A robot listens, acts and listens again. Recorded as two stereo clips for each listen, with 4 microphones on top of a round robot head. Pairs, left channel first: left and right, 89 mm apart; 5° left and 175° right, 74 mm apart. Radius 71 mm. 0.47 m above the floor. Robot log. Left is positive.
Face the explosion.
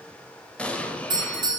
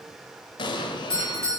note: The explosion: 15° left.
cmd yaw +15
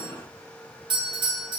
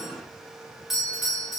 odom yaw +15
end: Facing where the explosion came from. I can't hear it now.